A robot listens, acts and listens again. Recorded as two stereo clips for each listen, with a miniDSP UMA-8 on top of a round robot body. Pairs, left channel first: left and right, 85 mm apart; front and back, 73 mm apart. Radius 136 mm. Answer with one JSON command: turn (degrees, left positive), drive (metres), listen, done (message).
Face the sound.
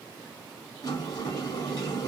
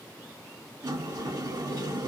{"turn": 135}
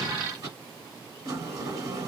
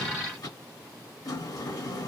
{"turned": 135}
{"turn": -40}
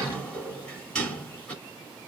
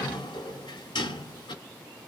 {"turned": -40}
{"turn": 10}
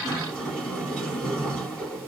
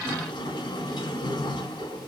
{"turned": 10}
{"done": "Found it: a sliding door, straight ahead, 1 to 2 m away."}